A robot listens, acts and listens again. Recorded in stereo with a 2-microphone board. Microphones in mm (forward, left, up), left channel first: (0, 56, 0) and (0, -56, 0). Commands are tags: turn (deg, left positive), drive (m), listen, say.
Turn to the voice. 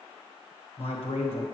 <turn deg="60"/>
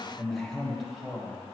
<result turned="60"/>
<say>Found it: a man speaking, straight ahead.</say>